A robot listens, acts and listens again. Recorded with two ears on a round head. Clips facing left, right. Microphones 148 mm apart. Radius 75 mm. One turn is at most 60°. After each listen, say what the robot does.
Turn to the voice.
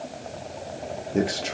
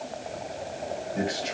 Turn 55° left.
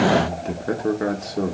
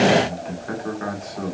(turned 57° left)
Turn 50° left.
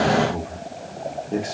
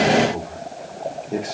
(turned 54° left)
Found it: a man speaking, straight ahead.